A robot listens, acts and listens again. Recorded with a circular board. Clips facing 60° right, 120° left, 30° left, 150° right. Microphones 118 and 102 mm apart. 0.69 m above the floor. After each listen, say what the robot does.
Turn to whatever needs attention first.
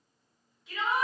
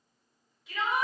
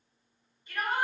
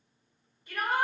Turn 155° right.
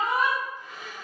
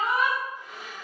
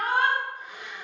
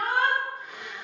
Turn 20° right.
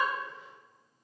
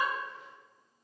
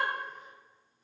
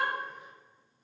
Keep listening.
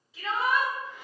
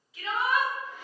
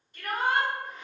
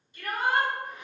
Found it: a shout, straight ahead, 1 to 2 m away.